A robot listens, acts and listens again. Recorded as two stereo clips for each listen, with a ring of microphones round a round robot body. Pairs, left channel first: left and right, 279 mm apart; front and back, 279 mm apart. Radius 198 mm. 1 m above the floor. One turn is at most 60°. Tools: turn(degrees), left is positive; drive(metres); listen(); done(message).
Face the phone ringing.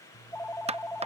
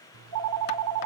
turn(degrees=60)
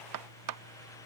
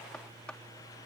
turn(degrees=60)
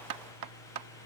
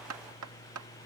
turn(degrees=60)
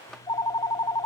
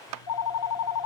turn(degrees=15)
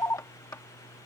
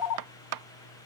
turn(degrees=10)
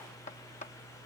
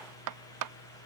done("Found it: a phone ringing, straight ahead.")